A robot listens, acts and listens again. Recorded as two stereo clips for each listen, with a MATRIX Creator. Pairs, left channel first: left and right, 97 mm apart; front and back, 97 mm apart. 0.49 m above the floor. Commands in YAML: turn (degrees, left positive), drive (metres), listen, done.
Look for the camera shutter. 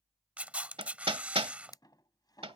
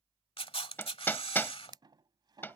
turn: -15
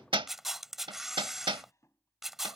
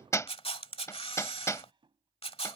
done: "Facing the camera shutter."